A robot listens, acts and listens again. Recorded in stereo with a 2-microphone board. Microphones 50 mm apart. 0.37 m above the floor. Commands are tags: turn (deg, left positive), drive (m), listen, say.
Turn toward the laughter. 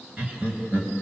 <turn deg="-35"/>
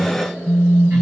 <listen/>
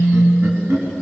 <turn deg="-115"/>
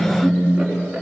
<say>Facing the laughter.</say>